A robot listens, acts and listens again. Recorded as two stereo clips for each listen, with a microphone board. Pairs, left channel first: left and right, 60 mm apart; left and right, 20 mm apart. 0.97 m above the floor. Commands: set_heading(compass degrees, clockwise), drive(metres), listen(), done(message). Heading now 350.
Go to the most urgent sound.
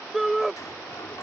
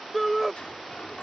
set_heading(320)
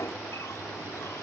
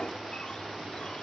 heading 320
listen()
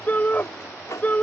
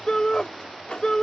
set_heading(165)
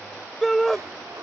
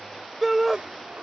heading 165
drive(1.0)
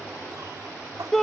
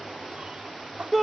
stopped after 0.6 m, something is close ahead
done("Blocked. The shout is further on, straight ahead.")